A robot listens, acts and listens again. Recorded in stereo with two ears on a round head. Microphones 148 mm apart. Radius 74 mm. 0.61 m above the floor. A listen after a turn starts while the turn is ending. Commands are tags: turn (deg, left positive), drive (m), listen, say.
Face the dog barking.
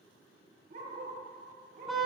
<turn deg="-55"/>
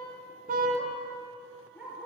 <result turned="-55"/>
<turn deg="-10"/>
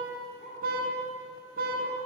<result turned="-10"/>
<listen/>
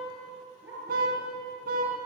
<turn deg="-15"/>
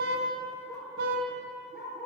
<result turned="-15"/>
<say>Facing the dog barking.</say>